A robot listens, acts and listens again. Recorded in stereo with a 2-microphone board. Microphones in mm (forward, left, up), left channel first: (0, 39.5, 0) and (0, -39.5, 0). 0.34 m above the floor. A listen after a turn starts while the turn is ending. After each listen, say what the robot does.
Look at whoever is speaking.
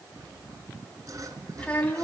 Turn 20° left.
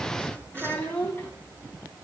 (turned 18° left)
Turn 20° left.
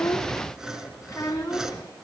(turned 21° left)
Turn 30° left.
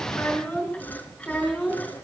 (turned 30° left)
Turn 10° left.
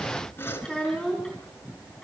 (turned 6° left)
Found it: a child speaking, straight ahead.